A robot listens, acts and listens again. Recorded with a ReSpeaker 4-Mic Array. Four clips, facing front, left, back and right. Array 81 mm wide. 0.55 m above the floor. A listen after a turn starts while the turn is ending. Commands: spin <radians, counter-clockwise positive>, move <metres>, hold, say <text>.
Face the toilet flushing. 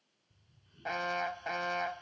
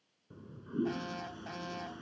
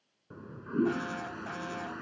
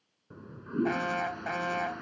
spin -2.62
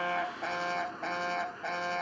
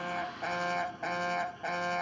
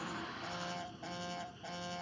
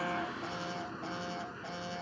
spin -0.70
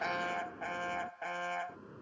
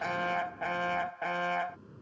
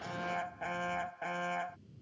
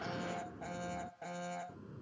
say Facing the toilet flushing.